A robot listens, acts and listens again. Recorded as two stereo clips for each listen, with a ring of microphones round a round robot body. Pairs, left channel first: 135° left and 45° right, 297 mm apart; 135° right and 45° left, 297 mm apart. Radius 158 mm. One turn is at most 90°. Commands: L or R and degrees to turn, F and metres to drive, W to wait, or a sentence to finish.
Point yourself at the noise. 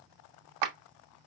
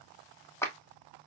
R50
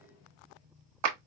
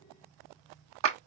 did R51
Found it: a clap, straight ahead.